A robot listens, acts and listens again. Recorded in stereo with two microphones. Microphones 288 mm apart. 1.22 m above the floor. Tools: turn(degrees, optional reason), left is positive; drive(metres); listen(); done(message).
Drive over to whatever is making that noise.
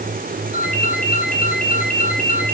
turn(degrees=30, reason="The ringtone: about 30° left or 150° left.")
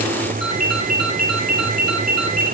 turn(degrees=120, reason="So it is at 120° left.")
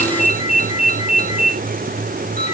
turn(degrees=25, reason="The ringtone is now 25° left.")
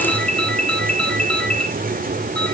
drive(metres=1.0)
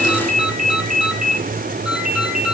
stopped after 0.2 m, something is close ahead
done("Something is in my way. I am facing the ringtone but have not reached it.")